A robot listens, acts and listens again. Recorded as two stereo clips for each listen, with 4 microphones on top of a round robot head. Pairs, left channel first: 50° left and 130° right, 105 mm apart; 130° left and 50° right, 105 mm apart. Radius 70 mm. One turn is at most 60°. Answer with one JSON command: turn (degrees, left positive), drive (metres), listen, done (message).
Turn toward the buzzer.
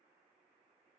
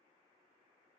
{"listen": true}
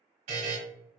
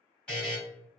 {"turn": -60}
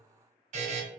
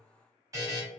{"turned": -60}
{"turn": -60}
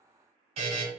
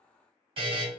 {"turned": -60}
{"turn": -60}
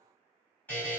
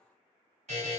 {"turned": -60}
{"turn": -25}
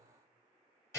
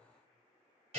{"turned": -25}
{"turn": -15}
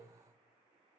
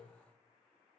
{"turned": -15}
{"listen": true}
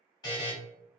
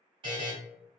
{"done": "Facing the buzzer."}